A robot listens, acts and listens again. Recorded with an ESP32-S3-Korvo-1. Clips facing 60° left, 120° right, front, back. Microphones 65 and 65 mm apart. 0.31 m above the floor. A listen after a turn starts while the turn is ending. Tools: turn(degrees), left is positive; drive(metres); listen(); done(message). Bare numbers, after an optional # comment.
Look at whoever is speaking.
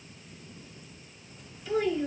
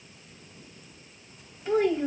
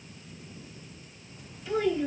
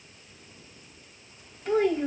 # The child speaking: 155° right.
turn(-155)
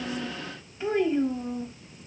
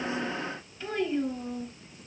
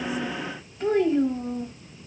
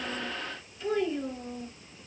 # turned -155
done("Facing the child speaking.")